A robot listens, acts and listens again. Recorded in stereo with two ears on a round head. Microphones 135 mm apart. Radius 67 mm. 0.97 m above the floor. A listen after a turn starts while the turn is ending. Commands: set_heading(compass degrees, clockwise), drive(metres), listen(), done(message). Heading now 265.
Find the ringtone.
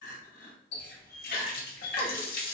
listen()
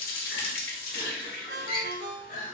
set_heading(330)
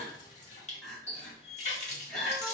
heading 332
listen()
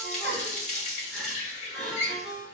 done("Found it: a ringtone, straight ahead.")